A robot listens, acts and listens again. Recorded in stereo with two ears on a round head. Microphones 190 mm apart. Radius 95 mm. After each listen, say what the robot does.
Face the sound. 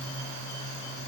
Keep listening.
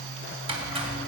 Turn 30° right.
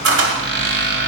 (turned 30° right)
Turn 125° right.
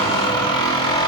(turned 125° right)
Turn 20° left.
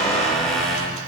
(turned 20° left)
Found it: a squeak, straight ahead, 2 to 4 m away.